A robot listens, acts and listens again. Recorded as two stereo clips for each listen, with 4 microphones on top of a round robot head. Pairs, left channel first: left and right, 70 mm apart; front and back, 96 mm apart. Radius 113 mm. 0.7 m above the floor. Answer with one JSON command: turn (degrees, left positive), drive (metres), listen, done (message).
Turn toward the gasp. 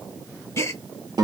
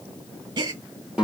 {"turn": 135}
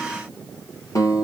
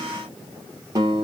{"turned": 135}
{"done": "Facing where the gasp came from. I can't hear it now."}